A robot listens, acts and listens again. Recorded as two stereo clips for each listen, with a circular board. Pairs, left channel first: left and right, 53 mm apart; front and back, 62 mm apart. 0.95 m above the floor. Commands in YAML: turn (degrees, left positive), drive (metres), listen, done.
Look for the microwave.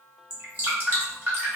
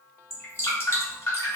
listen: true
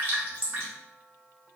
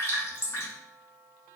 listen: true
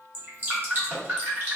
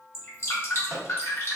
turn: -125
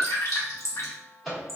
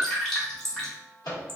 done: "Facing the microwave, 1 to 2 m away."